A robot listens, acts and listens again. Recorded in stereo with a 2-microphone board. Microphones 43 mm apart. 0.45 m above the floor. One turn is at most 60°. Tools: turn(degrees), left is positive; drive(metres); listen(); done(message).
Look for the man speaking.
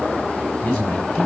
turn(degrees=30)
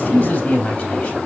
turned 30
turn(degrees=60)
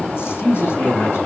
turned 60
turn(degrees=60)
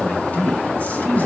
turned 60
turn(degrees=40)
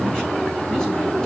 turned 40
listen()
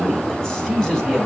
turn(degrees=15)
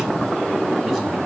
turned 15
listen()
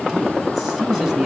done("Facing the man speaking, over 4 m away.")